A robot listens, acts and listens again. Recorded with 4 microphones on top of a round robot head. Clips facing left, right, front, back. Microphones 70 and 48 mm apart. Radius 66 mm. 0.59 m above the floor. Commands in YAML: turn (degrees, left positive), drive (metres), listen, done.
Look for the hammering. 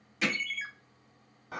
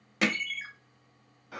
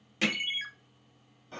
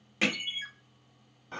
turn: -105
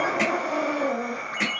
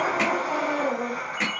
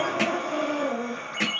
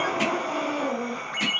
done: "Facing the hammering."